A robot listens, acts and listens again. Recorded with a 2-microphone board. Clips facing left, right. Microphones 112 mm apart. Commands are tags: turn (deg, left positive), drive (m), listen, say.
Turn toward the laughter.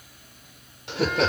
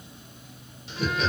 <turn deg="70"/>
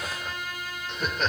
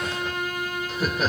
<say>Facing the laughter.</say>